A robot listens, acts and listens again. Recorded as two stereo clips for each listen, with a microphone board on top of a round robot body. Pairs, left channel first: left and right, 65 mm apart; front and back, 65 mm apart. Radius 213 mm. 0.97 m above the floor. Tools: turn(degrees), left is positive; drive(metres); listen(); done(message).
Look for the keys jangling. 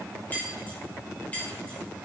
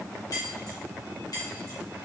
turn(degrees=20)
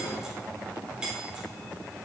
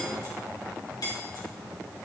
turn(degrees=-15)
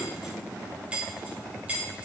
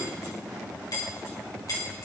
turn(degrees=-20)
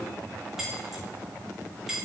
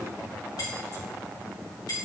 done("Facing the keys jangling.")